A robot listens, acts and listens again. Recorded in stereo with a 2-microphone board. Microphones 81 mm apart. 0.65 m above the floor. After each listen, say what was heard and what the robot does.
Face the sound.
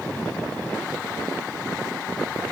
Keep listening.
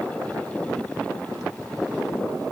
Keep listening.
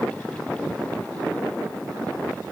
I can't make out anything to turn to.